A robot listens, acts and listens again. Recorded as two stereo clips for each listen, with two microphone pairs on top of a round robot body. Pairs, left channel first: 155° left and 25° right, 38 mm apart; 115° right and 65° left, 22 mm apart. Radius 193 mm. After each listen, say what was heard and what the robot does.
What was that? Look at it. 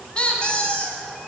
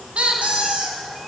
The squeak: 90° left. Turn 90° left.
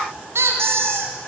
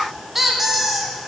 The squeak is now 15° right. Turn 15° right.
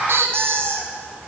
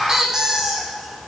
Found it: a squeak, straight ahead.